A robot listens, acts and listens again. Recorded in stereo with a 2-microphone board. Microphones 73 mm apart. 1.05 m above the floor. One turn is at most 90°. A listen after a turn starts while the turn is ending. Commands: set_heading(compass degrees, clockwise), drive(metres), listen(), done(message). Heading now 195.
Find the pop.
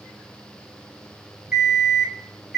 listen()
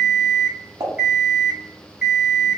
set_heading(260)
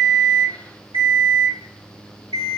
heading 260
listen()
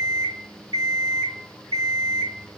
done("I heard a pop, but can't make it out now. It was about straight ahead or 50° right.")